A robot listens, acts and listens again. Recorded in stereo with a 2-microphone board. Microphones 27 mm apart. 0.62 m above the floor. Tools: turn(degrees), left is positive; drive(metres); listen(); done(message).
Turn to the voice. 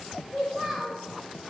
turn(degrees=-20)
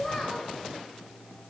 done("Found it: a child speaking, straight ahead, 1 to 2 m away.")